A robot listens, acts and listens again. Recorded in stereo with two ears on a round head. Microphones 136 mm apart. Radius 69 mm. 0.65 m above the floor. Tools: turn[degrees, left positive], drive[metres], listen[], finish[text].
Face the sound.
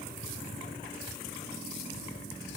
Action: listen[]
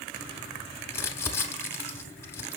Thought: The crumpling: about 15° left or 165° left.
Action: turn[15]
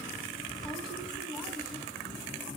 Action: finish[Facing the crumpling.]